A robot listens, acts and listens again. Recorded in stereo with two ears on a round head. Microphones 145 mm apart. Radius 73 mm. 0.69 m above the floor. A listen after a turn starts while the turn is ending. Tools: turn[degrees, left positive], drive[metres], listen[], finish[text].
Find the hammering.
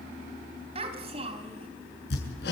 Thought: The hammering: about 70° left or 110° left.
Action: turn[70]
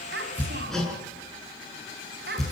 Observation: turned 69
Action: finish[Facing the hammering, over 4 m away.]